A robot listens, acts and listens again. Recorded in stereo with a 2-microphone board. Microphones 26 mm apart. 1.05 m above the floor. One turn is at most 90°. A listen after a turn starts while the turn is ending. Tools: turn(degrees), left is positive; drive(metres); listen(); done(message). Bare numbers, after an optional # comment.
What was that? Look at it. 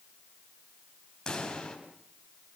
# The pop: about 25° left or 155° left.
turn(25)
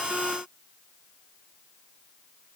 listen()
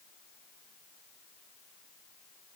done("I heard a pop, but can't make it out now. It was about straight ahead or 130° left.")